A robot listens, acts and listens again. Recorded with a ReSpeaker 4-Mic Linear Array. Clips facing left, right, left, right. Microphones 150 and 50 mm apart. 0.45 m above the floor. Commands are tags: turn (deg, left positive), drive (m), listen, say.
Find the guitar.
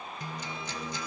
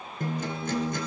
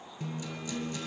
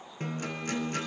<turn deg="-50"/>
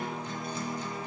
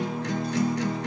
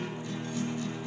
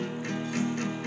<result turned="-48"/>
<turn deg="-80"/>
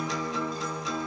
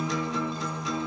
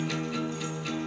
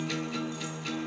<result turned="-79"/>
<say>Facing the guitar, 2 to 4 m away.</say>